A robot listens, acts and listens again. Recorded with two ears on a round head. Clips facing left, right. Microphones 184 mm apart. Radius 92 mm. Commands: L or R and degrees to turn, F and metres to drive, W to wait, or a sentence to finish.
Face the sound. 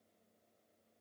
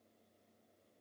W
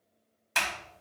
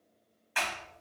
L55
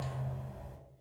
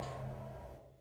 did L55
L70
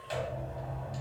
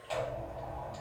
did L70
L15
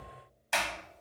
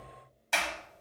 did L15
Facing the sliding door, under 1 m away.